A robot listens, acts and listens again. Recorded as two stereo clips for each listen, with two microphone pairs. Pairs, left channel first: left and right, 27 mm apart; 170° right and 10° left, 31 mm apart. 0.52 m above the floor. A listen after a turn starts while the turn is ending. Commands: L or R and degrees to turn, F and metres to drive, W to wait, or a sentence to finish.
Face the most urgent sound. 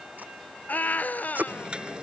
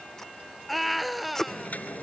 L105
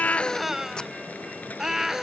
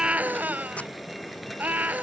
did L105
R10
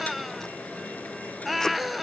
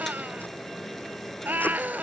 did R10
Found it: a scream, straight ahead.